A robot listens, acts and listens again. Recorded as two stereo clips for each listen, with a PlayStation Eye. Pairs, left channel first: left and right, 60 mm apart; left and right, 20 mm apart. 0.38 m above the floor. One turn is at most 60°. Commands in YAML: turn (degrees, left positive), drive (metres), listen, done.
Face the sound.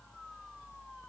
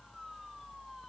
listen: true
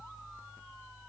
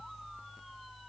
listen: true
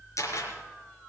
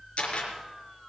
turn: 60
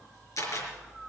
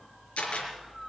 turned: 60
turn: 60
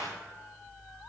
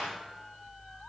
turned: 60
listen: true
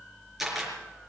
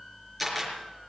done: "Found it: a camera shutter, straight ahead, over 4 m away."